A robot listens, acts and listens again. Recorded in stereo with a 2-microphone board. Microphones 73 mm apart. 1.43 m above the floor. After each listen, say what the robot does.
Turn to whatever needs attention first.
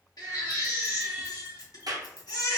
Turn 60° left.
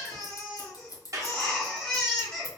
Turn 10° left.
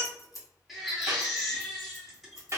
Facing the baby crying.